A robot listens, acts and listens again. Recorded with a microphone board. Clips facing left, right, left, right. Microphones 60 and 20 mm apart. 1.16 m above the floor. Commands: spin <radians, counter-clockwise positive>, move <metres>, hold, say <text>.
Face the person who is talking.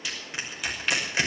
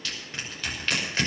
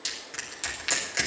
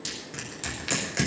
hold
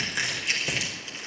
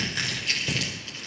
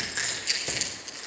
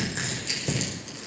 hold
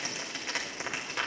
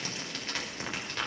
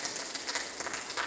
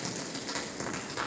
say I can't make out anyone speaking to turn to.